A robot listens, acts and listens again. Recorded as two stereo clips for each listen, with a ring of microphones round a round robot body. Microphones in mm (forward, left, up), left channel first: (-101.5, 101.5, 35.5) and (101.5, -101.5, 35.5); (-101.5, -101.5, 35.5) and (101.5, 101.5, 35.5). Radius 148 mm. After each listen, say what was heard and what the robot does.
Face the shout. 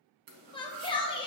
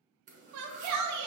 The shout: 65° left. Turn 65° left.
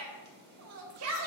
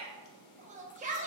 The shout is now 20° right. Turn 20° right.
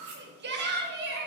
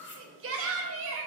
Facing the shout.